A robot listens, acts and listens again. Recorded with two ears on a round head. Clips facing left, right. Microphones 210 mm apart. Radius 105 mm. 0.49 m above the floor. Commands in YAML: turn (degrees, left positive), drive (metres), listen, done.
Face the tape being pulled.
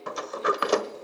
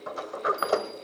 listen: true
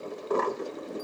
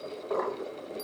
listen: true
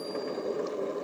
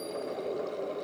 done: "I can't make out tape being pulled, only a sliding door."